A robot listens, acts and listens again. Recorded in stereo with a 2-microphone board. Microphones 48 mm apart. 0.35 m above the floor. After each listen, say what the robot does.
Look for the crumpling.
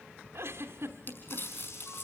Turn 45° left.
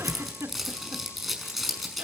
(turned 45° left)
Found it: crumpling, straight ahead.